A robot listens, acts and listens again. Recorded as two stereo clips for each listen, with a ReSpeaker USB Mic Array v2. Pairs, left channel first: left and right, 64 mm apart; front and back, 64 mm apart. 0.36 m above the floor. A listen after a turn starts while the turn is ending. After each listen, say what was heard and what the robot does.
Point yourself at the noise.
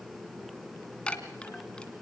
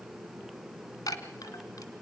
The chime: 15° left. Turn 15° left.
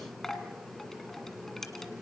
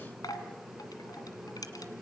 Found it: a chime, straight ahead, 1 to 2 m away.